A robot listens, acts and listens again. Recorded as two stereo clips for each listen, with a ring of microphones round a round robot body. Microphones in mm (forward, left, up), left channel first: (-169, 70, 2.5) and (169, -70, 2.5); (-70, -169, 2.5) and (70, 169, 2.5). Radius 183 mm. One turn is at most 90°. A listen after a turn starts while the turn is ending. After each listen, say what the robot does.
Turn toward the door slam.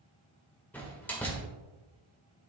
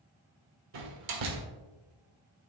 Turn 70° left.
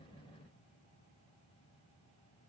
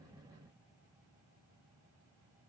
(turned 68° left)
I heard a door slam from this way, but can't make it out now.